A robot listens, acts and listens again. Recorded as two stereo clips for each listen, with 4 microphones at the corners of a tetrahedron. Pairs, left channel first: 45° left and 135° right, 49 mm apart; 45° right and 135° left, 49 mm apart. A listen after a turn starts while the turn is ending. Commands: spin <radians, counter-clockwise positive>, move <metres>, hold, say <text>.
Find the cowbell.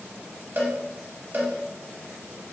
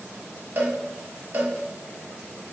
spin 3.14
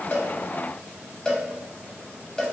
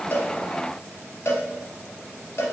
spin -0.52
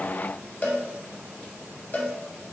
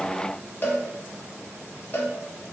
say Found it: a cowbell, straight ahead.